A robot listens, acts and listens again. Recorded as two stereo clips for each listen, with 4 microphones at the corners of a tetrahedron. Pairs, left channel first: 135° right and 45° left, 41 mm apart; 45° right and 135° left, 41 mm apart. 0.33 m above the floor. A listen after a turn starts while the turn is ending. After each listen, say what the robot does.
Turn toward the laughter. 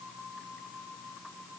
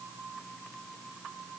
Keep listening.
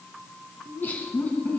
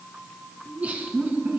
Turn 175° right.
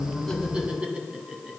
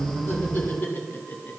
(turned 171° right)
Turn 25° right.
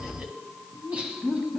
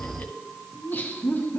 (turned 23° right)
Turn 20° right.
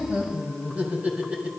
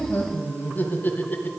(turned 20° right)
Turn 10° right.
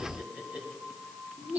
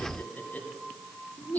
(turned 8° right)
Facing the laughter.